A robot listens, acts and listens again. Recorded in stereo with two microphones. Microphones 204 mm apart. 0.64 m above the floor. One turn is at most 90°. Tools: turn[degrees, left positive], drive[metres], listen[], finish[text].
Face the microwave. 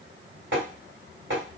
Action: listen[]
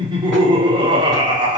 Action: listen[]
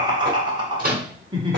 Thought: The microwave: about 45° right or 135° right.
Action: turn[-45]
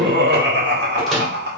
Action: finish[Found it: a microwave, straight ahead.]